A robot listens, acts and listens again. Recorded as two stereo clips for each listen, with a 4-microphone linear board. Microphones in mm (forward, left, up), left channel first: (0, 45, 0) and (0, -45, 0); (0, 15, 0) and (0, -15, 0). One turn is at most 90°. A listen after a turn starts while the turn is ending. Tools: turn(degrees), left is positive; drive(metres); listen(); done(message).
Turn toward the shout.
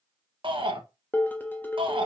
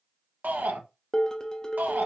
turn(degrees=-70)
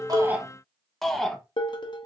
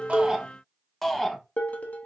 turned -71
done("Facing the shout.")